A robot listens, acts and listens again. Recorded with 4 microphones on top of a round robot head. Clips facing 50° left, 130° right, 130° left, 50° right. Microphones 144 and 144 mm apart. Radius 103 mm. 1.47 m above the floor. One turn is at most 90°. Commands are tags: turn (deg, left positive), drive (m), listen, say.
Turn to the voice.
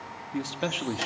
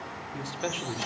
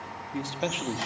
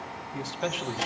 <turn deg="60"/>
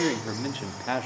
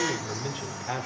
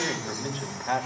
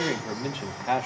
<turn deg="20"/>
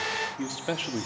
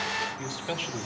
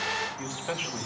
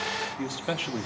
<turn deg="10"/>
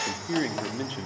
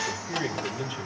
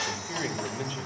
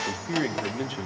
<say>Found it: a man speaking, straight ahead.</say>